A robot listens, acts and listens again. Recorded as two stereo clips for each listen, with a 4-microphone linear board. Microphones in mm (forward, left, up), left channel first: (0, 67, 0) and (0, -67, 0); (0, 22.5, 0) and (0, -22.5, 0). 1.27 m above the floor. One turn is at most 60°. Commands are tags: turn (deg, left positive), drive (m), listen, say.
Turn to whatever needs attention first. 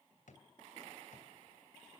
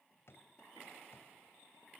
<listen/>
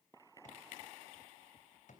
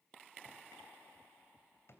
<listen/>
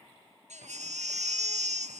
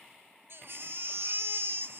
<turn deg="-60"/>
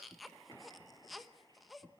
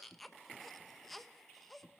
<say>Facing the baby crying.</say>